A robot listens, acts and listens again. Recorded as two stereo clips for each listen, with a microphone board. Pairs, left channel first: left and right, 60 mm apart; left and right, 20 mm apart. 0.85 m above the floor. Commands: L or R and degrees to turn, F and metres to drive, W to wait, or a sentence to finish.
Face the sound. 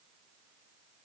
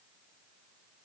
W
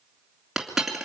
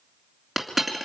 R30
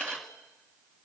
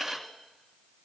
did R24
W
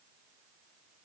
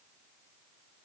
I heard a dropped coin, but can't make it out now. It was about 20° left or 150° right.